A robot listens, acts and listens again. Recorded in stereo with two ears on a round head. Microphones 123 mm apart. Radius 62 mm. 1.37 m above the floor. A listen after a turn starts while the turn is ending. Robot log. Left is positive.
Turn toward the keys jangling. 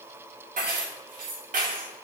note: The keys jangling: about 65° right or 115° right.
cmd yaw -65
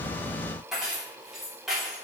end: Found it: keys jangling, straight ahead, 2 to 4 m away.